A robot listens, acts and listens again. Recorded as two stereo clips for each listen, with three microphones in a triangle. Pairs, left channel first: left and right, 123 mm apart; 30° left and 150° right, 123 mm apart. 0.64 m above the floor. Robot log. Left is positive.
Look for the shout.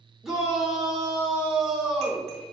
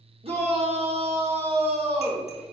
note: The shout: 175° right.
cmd yaw -175
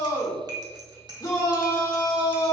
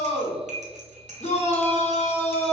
note: The shout is now 35° left.
cmd yaw +35
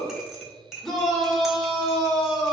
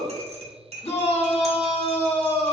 end: Found it: a shout, straight ahead.